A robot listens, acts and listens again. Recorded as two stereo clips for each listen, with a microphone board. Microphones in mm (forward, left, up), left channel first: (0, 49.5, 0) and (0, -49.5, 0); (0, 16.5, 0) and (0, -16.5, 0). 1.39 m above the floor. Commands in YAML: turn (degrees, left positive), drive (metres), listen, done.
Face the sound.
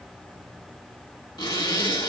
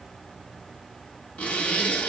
turn: 45
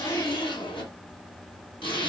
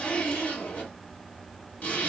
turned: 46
turn: 75
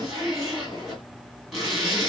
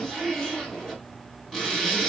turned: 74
done: "Facing the zipper."